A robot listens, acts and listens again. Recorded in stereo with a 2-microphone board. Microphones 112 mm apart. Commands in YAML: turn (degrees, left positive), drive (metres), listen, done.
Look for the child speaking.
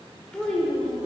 turn: 30
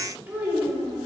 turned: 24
turn: -20
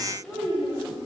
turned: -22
done: "Facing the child speaking, over 4 m away."